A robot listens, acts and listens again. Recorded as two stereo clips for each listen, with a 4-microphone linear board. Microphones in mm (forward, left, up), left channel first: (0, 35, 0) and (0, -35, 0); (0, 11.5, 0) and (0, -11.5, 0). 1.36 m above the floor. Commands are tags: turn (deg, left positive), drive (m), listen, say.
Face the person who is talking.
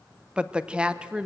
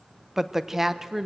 <turn deg="-30"/>
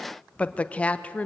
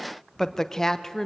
<turn deg="20"/>
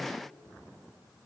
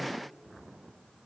<listen/>
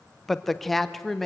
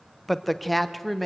<say>Facing the woman speaking, under 1 m away.</say>